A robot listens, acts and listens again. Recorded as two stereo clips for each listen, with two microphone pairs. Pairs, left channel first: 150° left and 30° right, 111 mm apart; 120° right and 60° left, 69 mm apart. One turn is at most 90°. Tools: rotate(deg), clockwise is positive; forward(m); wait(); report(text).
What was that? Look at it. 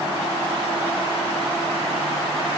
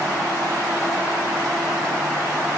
wait()
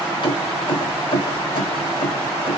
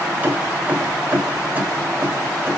rotate(-90)
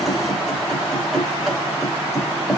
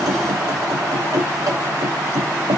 rotate(-55)
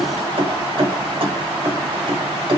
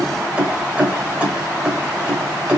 rotate(10)
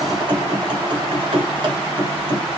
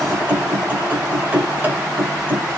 report("Found it: keys jangling, straight ahead.")